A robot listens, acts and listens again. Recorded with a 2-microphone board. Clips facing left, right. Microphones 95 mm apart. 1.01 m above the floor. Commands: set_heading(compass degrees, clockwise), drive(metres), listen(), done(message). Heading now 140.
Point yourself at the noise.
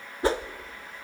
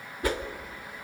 set_heading(110)
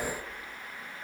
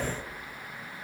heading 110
listen()
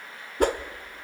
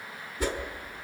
set_heading(350)
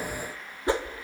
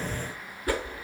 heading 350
set_heading(320)
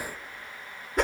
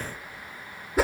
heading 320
done("Facing the whoosh.")